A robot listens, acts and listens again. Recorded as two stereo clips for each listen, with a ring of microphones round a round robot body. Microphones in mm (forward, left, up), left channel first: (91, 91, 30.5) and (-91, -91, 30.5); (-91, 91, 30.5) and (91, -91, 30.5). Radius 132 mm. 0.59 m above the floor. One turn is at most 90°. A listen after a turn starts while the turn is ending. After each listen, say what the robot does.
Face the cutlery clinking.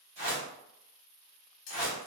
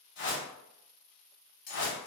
Turn 80° left.
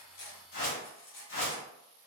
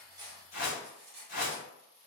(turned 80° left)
Facing the cutlery clinking, under 1 m away.